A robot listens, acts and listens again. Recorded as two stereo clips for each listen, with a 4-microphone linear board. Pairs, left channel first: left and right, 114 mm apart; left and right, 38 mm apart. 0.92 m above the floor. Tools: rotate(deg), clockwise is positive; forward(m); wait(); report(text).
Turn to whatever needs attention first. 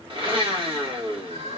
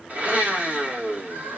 rotate(90)
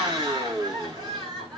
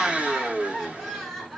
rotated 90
report("Found it: crying, straight ahead.")